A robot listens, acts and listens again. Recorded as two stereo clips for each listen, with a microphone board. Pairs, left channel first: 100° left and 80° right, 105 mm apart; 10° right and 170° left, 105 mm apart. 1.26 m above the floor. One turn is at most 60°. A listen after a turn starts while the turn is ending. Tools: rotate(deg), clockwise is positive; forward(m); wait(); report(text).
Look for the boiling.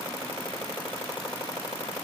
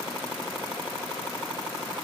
wait()
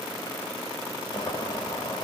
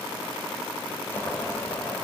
rotate(-55)
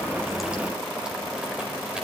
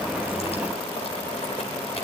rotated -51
report("Facing the boiling.")